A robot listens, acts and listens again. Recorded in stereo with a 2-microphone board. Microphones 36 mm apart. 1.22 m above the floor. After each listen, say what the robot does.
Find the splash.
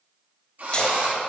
Turn 25° left.
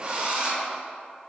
Keep listening.
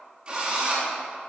I heard a splash, but can't make it out now. It was about straight ahead or 130° left.